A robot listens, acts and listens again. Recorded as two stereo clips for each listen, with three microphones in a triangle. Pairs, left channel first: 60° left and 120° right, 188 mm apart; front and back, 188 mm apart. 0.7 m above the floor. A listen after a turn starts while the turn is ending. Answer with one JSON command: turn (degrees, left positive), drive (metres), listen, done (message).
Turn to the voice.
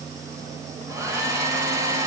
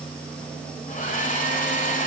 {"listen": true}
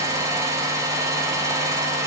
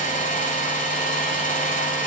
{"listen": true}
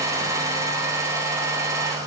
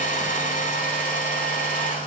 {"done": "I can't make out anyone speaking to turn to."}